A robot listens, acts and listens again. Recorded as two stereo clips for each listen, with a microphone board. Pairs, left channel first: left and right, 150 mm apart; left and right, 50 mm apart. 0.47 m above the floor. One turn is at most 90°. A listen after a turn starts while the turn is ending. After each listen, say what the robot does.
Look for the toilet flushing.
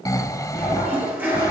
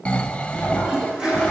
Turn 30° right.
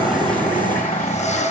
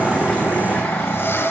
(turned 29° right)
Keep listening.
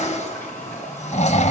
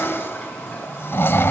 Turn 15° left.
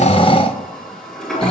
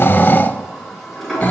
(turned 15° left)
Facing the toilet flushing, over 4 m away.